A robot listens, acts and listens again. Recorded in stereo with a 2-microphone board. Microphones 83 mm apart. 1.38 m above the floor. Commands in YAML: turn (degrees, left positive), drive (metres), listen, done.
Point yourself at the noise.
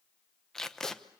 turn: 30
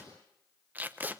turn: -20
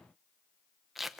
done: "Facing the tape being pulled."